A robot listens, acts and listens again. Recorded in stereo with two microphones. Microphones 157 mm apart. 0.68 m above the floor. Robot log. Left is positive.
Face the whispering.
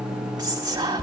note: The whispering: about 25° right or 155° right.
cmd yaw -25
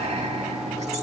note: So it is at 130° right.
cmd yaw -130
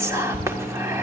note: The whispering is now 20° right.
cmd yaw -20
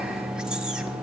cmd idle
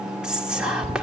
end: Found it: whispering, straight ahead.